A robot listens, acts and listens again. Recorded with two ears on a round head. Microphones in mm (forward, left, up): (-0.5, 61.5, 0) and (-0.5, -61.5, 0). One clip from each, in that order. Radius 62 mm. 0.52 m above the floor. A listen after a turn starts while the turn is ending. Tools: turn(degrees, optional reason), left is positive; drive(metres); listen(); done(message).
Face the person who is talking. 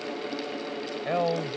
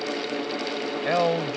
turn(degrees=-30, reason="The man speaking: about 30° right or 150° right.")
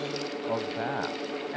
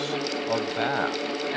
turn(degrees=-115, reason="So it is at 115° right.")
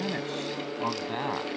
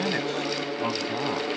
turn(degrees=30, reason="The man speaking is now 30° left.")
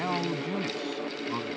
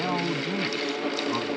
done("Found it: a man speaking, straight ahead.")